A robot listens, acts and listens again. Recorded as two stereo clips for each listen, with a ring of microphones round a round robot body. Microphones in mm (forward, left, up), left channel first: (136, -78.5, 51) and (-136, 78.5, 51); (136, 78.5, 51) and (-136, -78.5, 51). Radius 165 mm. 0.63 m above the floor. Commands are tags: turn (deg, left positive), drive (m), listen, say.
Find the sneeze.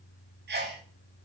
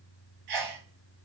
<turn deg="-150"/>
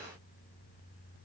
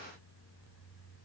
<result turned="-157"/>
<say>Facing where the sneeze came from. I can't hear it now.</say>